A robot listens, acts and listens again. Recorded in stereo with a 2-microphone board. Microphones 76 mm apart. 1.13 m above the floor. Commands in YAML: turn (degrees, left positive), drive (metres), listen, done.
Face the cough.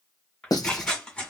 listen: true
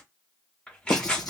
listen: true
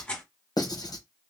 done: "I can't make out a cough, only tearing paper and writing."